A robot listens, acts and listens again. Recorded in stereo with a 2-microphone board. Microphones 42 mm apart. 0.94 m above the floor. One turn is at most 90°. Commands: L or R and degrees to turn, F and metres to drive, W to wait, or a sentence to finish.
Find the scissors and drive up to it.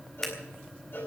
L30
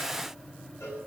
W
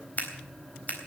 L90
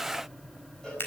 L70
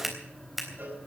F1.0
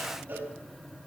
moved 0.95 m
W
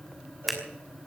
F1.0
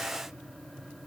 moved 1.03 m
W
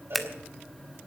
F1.0
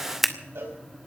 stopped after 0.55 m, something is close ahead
Arrived at the scissors, straight ahead.